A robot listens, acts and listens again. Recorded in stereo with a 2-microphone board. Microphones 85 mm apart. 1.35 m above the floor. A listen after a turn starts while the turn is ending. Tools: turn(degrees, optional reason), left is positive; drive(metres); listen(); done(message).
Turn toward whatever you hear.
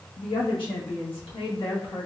turn(degrees=90)
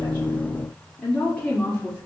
turn(degrees=25, reason="So it is at 25° left.")
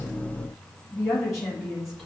done("Found it: a woman speaking, straight ahead.")